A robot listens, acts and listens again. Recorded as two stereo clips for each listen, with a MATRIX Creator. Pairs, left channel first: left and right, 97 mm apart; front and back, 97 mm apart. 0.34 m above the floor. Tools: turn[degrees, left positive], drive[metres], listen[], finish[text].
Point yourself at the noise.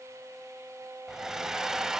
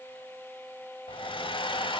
Action: finish[Found it: a hair dryer, straight ahead, under 1 m away.]